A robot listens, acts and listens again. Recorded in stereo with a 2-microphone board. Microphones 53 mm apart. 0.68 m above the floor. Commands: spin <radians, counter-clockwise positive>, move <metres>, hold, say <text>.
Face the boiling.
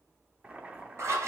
spin -0.35
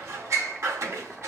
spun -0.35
say Facing the boiling.